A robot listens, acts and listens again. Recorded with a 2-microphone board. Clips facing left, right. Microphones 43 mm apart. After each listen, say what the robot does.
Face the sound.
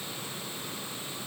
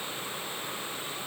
Keep listening.
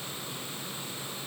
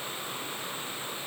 Keep listening.
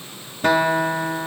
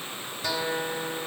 Turn 50° left.
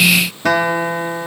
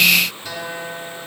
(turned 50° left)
Turn 80° left.
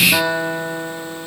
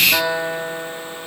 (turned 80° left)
Found it: a guitar, straight ahead, 1 to 2 m away.